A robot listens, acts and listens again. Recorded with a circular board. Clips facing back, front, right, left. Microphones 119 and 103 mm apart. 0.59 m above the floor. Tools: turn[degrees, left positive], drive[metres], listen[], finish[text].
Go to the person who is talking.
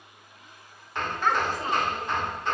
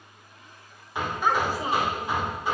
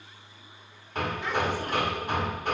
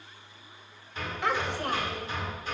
Thought: The child speaking: 80° left.
Action: turn[80]
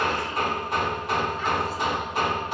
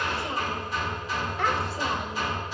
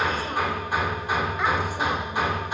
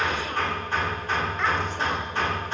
Action: listen[]
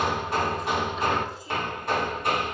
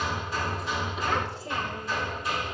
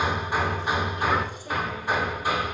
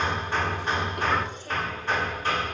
Action: listen[]
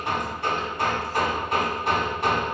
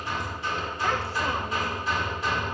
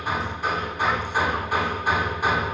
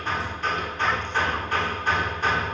Action: finish[I heard a child speaking from this way, but can't make it out now. I did not reach it.]